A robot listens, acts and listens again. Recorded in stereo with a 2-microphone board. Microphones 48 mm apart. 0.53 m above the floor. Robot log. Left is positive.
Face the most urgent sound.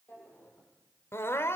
note: The crying: about 65° left or 115° left.
cmd yaw +65
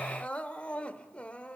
note: So it is at 30° left.
cmd yaw +30
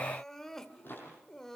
note: The crying is now 10° left.
cmd yaw +10
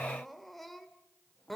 end: Facing the crying.